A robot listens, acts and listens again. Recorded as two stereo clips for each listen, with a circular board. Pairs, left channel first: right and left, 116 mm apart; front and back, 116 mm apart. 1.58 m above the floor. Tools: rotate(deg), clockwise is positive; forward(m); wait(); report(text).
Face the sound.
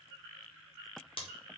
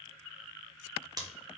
rotate(125)
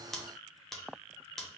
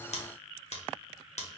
report("Found it: scissors, straight ahead, 1 to 2 m away.")